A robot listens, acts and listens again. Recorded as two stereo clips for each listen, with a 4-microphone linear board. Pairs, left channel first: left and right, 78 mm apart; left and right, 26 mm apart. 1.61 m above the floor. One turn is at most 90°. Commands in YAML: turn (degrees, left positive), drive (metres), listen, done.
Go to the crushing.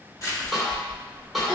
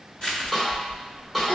turn: 50
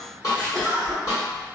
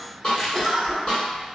turn: 80
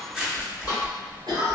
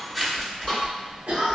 drive: 1.0
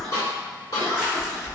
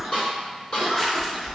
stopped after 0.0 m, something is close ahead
done: "Blocked. The crushing is further on, straight ahead."